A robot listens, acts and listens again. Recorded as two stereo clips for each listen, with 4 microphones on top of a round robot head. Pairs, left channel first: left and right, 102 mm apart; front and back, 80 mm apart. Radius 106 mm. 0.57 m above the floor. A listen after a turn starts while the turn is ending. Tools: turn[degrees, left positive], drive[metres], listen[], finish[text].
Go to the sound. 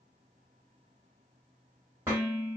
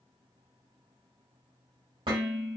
Thought: The dishes clattering: 160° right.
Action: turn[-160]
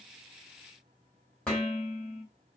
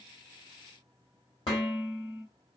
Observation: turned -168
Thought: The dishes clattering is now 10° left.
Action: turn[10]
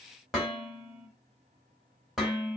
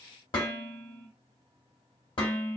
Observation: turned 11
Action: drive[1.0]
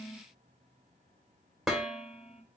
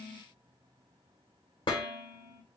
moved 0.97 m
Action: drive[1.0]
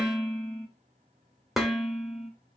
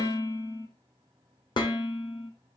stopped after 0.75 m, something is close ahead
Action: finish[Arrived at the dishes clattering, straight ahead.]